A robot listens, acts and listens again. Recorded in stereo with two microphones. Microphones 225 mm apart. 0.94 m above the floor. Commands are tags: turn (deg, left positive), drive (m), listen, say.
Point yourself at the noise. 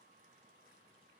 <listen/>
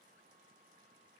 <listen/>
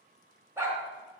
<turn deg="-30"/>
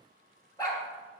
<turn deg="20"/>
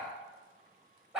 <say>Facing the dog barking.</say>